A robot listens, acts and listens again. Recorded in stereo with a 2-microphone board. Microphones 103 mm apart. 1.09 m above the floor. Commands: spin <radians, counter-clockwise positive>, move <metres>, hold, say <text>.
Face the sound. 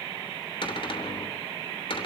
spin 1.05
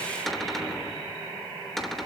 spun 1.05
say Found it: a cupboard door, straight ahead, 2 to 4 m away.